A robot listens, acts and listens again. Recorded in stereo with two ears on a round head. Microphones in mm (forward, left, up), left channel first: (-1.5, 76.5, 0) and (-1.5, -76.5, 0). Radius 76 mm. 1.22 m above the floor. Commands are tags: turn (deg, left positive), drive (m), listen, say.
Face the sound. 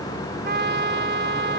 <turn deg="-60"/>
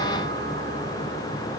<listen/>
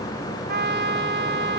<turn deg="-60"/>
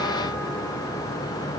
<listen/>
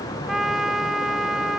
<say>Found it: a trumpet, straight ahead.</say>